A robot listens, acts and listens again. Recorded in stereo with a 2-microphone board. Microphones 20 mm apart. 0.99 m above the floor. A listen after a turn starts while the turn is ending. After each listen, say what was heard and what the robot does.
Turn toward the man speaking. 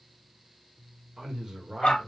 The man speaking: about 35° right or 145° right. Turn 35° right.
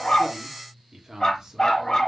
The man speaking: about 30° right or 150° right. Turn 30° right.
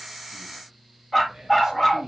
The man speaking: about 35° right or 145° right. Turn 35° right.
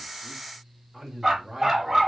Found it: a man speaking, straight ahead.